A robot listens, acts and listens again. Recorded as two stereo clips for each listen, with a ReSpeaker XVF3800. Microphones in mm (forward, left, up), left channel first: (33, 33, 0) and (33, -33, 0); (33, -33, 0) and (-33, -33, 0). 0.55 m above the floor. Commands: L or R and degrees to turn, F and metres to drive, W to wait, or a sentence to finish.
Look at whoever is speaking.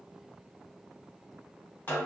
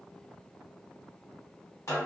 W
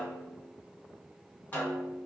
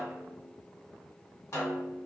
W
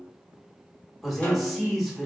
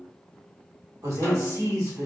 L180
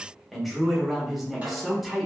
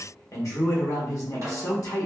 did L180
Facing the man speaking, 1 to 2 m away.